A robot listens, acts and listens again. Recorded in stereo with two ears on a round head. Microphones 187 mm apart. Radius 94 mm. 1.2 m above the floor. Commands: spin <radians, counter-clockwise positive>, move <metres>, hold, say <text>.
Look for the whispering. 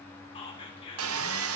spin 0.44
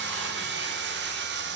hold
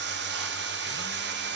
hold
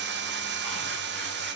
say I heard whispering, but can't make it out now. It was about straight ahead or 130° left.